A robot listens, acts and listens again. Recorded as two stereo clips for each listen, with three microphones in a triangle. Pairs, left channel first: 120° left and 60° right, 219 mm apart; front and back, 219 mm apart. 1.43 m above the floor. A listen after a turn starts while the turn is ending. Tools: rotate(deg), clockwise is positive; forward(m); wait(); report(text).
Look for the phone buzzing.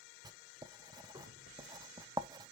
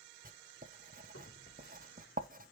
rotate(40)
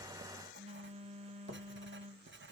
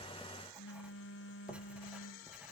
report("Found it: a phone buzzing, straight ahead, under 1 m away.")